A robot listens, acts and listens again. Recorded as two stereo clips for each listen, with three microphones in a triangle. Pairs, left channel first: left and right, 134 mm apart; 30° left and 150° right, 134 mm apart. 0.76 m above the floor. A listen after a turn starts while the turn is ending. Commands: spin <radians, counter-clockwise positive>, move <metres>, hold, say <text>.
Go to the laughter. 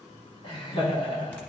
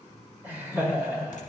spin 2.36
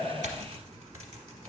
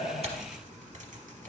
hold
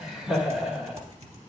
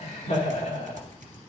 move 1.0
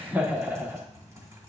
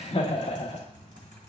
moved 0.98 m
spin -0.26
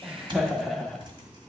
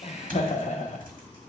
move 1.0
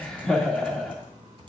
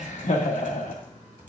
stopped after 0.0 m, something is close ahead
say I am next to the laughter.